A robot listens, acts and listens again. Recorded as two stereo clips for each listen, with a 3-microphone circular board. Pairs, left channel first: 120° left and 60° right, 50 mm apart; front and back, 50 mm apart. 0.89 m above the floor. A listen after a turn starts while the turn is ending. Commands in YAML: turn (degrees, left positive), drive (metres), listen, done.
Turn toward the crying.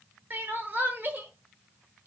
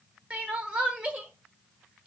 turn: -110
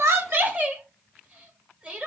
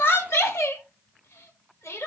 done: "Facing the crying."